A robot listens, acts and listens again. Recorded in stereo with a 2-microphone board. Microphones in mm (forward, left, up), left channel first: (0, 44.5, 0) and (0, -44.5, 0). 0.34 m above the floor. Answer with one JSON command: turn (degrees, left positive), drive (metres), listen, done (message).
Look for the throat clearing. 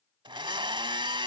{"listen": true}
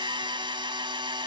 {"listen": true}
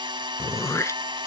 {"turn": 35}
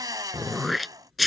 {"done": "Facing the throat clearing."}